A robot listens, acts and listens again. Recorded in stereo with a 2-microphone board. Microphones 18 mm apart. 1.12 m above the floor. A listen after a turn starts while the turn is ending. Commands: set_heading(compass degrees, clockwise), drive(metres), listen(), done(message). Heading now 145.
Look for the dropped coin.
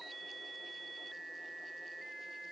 listen()
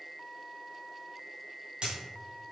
set_heading(210)
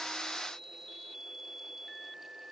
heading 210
listen()
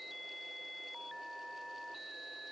done("I heard a dropped coin, but can't make it out now. It was about straight ahead or 50° right.")